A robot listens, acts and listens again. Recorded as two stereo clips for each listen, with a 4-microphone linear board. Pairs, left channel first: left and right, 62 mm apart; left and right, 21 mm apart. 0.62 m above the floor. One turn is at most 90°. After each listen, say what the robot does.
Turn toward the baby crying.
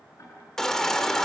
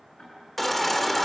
Turn 30° left.
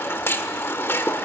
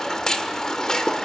Turn 90° left.
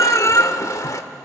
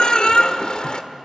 Turn 65° left.
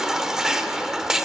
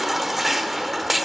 Turn 10° right.
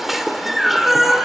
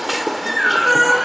Facing the baby crying, 1 to 2 m away.